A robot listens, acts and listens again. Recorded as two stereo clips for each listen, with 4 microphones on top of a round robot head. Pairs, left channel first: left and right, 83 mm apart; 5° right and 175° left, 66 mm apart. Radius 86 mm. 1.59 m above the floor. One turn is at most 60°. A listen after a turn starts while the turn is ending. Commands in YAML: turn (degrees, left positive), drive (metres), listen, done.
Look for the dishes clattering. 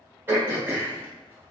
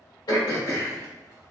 listen: true
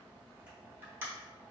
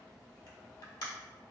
listen: true
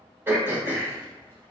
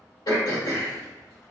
done: "I can't make out dishes clattering to turn to."